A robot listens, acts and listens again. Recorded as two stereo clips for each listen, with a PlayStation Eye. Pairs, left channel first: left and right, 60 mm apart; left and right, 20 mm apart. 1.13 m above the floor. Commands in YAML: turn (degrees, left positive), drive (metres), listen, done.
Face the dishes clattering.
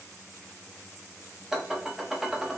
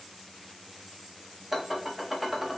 turn: -30
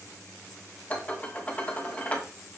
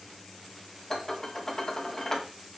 turn: 25
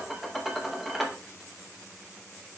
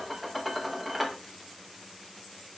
done: "Found it: dishes clattering, straight ahead, under 1 m away."